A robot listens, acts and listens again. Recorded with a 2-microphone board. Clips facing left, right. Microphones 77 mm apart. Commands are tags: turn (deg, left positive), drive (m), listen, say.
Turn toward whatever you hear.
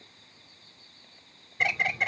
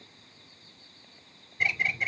<turn deg="70"/>
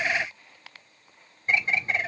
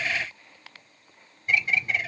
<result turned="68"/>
<turn deg="40"/>
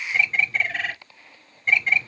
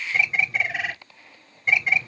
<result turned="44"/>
<say>Facing the bird.</say>